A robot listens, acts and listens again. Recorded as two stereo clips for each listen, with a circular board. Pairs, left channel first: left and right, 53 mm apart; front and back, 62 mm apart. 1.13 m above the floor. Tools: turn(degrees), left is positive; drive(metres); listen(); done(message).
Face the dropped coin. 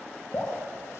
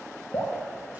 listen()
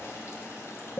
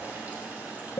listen()
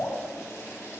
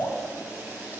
done("I can't make out a dropped coin, only dripping.")